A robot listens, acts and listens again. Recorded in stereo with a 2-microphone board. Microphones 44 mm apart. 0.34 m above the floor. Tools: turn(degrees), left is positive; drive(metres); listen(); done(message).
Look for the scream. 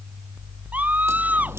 turn(degrees=-30)
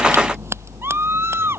turn(degrees=-120)
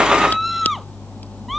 done("Facing the scream.")